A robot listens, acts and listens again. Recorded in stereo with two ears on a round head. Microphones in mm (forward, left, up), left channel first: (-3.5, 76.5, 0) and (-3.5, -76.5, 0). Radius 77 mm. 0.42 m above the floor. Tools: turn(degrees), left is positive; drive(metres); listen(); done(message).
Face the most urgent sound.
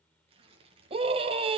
turn(degrees=-35)
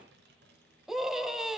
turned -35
done("Found it: a scream, straight ahead, 2 to 4 m away.")